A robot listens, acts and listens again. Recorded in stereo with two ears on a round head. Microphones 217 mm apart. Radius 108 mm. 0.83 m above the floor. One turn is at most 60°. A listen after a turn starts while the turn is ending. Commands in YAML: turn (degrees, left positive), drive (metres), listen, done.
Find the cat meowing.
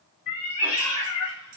turn: 60
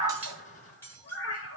turn: 60
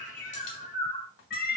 turn: 45
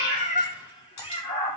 turn: 25
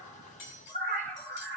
done: "Found it: a cat meowing, straight ahead, 2 to 4 m away."